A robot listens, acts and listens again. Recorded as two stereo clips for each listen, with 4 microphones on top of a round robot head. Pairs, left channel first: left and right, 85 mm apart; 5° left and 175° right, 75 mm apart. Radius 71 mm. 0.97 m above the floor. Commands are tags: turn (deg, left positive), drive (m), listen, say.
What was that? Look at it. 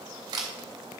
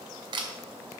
<turn deg="-140"/>
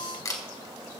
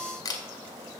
<turn deg="40"/>
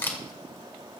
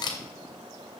<turn deg="25"/>
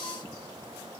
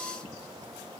<listen/>
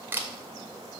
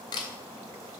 <turn deg="-25"/>
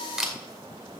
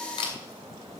<say>Facing the camera shutter, 2 to 4 m away.</say>